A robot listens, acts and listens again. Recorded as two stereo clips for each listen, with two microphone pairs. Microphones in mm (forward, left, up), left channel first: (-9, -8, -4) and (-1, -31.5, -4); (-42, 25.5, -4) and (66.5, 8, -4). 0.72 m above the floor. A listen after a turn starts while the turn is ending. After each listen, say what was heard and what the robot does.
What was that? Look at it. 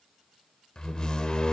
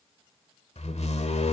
The door slam: 165° left. Turn 165° left.
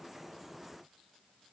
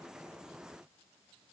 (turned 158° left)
I heard a door slam from this way, but can't make it out now.